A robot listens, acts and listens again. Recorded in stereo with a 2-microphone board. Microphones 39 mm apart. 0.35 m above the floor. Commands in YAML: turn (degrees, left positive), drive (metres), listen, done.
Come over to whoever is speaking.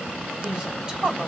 turn: -25
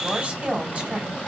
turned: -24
turn: -130
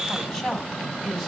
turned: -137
turn: 10
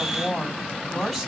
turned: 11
drive: 1.0
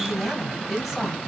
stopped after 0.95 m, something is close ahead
done: "Arrived at the woman speaking, straight ahead."